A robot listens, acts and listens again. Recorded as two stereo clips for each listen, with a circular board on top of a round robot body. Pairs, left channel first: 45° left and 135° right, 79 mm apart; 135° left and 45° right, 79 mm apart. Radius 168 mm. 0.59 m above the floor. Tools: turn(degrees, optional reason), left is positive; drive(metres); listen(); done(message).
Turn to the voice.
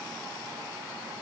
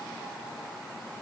listen()
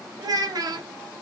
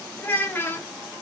turn(degrees=-165, reason="The child speaking: 165° right.")
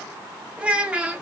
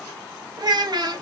turn(degrees=-60, reason="The child speaking is now 60° right.")
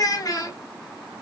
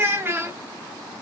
turn(degrees=10, reason="The child speaking is now 10° left.")
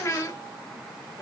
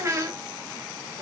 done("Facing the child speaking.")